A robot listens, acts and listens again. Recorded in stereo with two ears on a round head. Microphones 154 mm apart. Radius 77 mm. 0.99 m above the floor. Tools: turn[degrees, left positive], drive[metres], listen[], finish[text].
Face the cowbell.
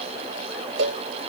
Action: turn[-90]
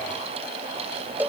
Thought: So it is at 10° right.
Action: turn[-10]
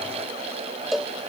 Action: finish[Found it: a cowbell, straight ahead.]